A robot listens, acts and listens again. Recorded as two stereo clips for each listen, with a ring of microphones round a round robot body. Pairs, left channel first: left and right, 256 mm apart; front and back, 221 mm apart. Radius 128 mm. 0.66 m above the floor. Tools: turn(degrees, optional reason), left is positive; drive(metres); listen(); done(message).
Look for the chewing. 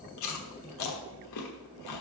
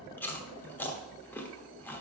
turn(degrees=80, reason="The chewing: 80° left.")
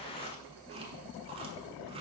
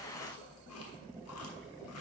turn(degrees=-20, reason="The chewing is now 20° right.")
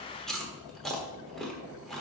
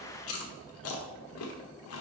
done("Found it: chewing, straight ahead.")